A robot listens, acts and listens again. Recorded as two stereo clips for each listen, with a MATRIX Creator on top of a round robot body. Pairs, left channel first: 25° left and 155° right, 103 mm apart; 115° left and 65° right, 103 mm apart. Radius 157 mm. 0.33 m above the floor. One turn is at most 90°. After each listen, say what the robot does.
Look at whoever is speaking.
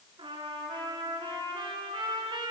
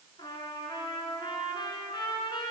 Keep listening.
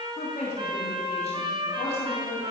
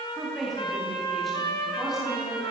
Turn 20° left.
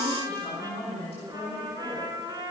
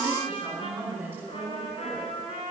Found it: a woman speaking, straight ahead.